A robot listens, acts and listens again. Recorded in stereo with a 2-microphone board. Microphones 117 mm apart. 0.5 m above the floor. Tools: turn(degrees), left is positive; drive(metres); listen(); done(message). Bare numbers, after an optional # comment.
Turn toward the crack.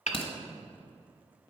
# The crack: about 55° left or 125° left.
turn(55)
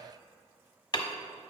listen()
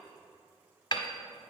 done("I heard a crack, but can't make it out now. It was about straight ahead or 70° left.")